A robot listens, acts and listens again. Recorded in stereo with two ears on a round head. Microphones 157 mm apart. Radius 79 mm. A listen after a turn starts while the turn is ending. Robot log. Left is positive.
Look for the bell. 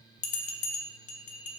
note: The bell: about 45° left or 135° left.
cmd yaw +45
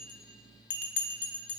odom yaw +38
note: So it is at 95° left.
cmd yaw +95
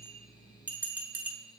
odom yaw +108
note: The bell is now 10° right.
cmd yaw -10
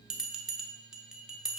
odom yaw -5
end: Found it: a bell, straight ahead.